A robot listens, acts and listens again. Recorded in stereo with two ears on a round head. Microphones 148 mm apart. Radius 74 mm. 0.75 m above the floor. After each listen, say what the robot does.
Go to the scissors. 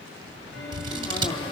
Turn 30° right.
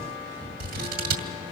Turn 120° right.
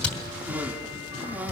Drive 1.0 m forward.
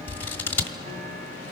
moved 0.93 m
Turn 15° left.
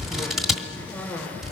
Drive 1.0 m forward.
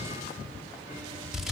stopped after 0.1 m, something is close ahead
I am next to the scissors.